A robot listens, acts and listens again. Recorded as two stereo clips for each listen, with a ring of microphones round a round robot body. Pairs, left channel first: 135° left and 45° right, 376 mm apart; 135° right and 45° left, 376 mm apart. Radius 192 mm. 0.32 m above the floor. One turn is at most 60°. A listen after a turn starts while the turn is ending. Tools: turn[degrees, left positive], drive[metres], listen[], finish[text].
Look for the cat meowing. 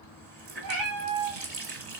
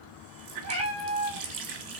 Thought: The cat meowing: 35° right.
Action: turn[-35]
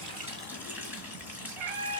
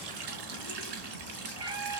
Thought: The cat meowing is now 40° right.
Action: turn[-40]
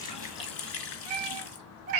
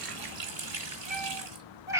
Thought: The cat meowing is now 40° right.
Action: turn[-40]
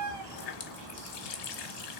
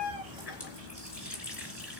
Action: listen[]
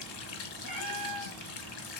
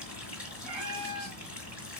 Action: finish[Facing the cat meowing.]